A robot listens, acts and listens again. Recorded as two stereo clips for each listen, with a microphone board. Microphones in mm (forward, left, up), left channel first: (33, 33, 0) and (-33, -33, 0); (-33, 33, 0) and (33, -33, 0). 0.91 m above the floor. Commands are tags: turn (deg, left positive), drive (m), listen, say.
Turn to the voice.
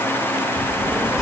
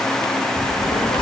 <turn deg="135"/>
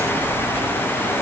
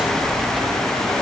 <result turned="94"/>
<turn deg="45"/>
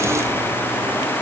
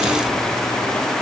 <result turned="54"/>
<turn deg="-10"/>
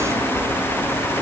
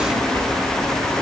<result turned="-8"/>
<turn deg="-15"/>
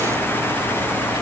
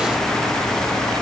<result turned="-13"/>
<listen/>
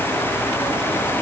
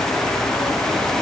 <listen/>
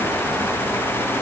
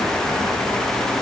<say>Facing where the child speaking came from. I can't hear it now.</say>